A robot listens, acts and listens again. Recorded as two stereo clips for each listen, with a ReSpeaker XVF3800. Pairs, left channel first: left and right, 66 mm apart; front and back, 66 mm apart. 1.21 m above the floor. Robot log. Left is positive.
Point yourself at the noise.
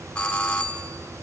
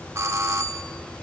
note: The doorbell: 155° left.
cmd yaw +155
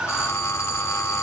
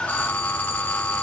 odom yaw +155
note: The doorbell is now 60° left.
cmd yaw +60
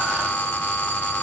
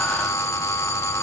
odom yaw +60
note: The doorbell is now 30° left.
cmd yaw +30
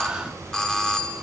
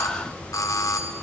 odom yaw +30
note: The doorbell is now 10° left.
cmd yaw +10
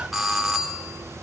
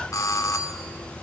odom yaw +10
end: Facing the doorbell, under 1 m away.